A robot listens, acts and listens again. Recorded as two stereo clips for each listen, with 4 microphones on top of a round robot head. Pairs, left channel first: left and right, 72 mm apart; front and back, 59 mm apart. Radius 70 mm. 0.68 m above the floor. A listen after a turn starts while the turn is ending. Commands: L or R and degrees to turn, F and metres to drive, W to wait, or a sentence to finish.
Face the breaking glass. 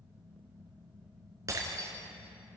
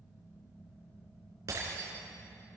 R135
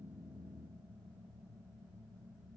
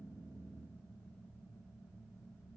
I heard breaking glass from this way, but can't make it out now.